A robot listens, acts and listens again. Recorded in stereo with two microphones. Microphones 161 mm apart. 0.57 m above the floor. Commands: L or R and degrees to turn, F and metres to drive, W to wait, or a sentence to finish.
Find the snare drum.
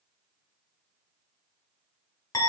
W
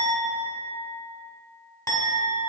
W
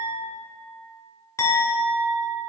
I can't make out a snare drum to turn to.